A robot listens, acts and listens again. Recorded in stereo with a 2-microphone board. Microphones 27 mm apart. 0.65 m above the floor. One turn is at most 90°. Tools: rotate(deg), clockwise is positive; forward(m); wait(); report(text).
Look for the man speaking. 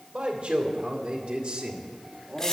rotate(45)
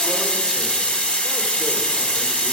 wait()
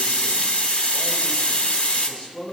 rotate(-50)
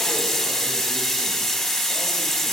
wait()
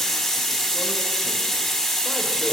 wait()
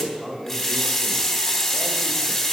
rotate(10)
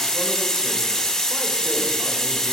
wait()
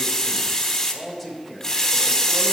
report("Found it: a man speaking, straight ahead.")